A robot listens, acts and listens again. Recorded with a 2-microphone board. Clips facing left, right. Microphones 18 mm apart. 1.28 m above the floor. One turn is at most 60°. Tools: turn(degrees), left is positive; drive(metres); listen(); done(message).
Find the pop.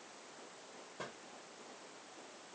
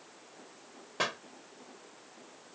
turn(degrees=-60)
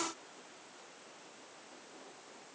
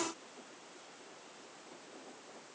turn(degrees=-30)
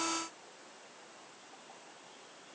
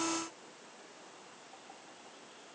done("I heard a pop from this way, but can't make it out now.")